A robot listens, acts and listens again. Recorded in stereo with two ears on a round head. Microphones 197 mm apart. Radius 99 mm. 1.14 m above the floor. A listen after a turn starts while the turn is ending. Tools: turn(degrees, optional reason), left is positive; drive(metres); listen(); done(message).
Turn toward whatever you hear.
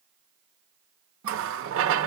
turn(degrees=-65, reason="The running tap: about 65° right or 115° right.")
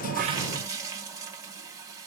turn(degrees=-15, reason="So it is at 15° right.")
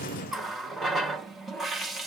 done("Facing the running tap.")